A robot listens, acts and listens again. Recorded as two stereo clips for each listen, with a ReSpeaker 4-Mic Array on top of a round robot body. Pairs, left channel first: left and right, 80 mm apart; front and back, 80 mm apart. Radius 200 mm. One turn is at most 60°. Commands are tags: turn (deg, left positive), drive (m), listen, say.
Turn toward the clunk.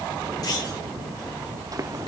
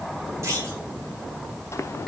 <turn deg="60"/>
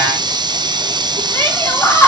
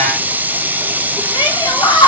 <turn deg="60"/>
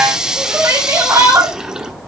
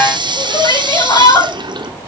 <turn deg="10"/>
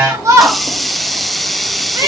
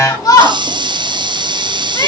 <say>Facing where the clunk came from. I can't hear it now.</say>